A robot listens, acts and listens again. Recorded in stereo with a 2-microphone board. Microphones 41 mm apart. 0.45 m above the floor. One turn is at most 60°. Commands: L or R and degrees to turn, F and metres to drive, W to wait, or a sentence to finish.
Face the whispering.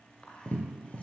L30
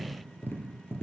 W
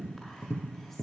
W
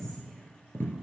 I heard whispering, but can't make it out now. It was about straight ahead or 120° left.